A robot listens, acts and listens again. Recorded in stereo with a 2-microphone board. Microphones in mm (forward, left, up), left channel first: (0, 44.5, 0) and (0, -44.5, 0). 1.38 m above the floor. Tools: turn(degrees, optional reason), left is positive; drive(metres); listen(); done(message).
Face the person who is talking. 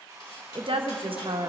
turn(degrees=-65, reason="The woman speaking: about 65° right or 115° right.")
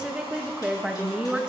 turn(degrees=-10, reason="So it is at 10° right.")
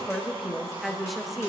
done("Facing the woman speaking.")